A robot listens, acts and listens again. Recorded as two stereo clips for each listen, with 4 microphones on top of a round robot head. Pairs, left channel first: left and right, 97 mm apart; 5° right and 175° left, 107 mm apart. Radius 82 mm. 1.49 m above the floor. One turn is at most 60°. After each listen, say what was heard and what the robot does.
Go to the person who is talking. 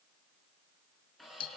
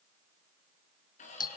Keep listening.
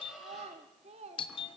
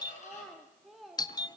The child speaking: 95° right. Turn 60° right.
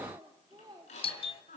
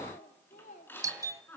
The child speaking is now 30° right. Turn 30° right.
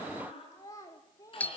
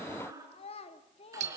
The child speaking is now 20° left. Turn 20° left.
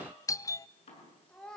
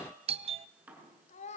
Drive 1.0 m forward.
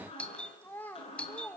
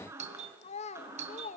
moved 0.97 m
The child speaking is now 10° left. Turn 10° left.
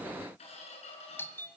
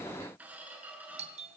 Keep listening.
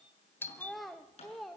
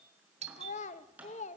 Drive 1.0 m forward.
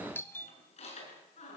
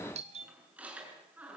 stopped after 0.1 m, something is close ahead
Keep listening.
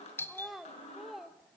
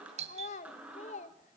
I am next to the child speaking.